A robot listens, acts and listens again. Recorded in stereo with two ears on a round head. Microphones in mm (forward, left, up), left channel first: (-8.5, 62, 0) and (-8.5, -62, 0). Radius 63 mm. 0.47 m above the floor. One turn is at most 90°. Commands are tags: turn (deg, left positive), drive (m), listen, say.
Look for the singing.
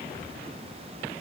<listen/>
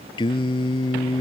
<turn deg="35"/>
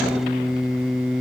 <say>Facing the singing.</say>